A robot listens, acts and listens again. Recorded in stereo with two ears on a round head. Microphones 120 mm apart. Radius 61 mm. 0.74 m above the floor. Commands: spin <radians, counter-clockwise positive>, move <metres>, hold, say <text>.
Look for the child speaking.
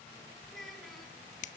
spin 0.52
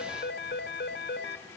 hold
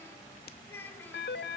spin 2.88
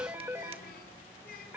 spin 1.22
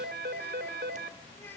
spin 0.26
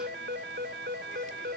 hold
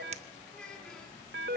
say Facing the child speaking, over 4 m away.